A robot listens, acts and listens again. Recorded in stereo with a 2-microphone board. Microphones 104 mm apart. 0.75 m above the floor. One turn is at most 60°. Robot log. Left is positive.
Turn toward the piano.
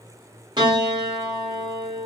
note: The piano: about 45° right or 135° right.
cmd yaw -45
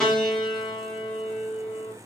end: Found it: a piano, straight ahead, 1 to 2 m away.